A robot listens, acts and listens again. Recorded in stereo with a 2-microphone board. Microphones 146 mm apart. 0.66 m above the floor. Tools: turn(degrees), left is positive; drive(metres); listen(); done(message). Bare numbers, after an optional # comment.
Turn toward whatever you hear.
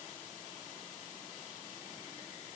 listen()
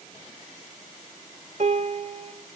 # The piano: about 50° right or 130° right.
turn(-50)
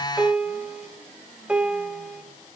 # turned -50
done("Found it: a piano, straight ahead.")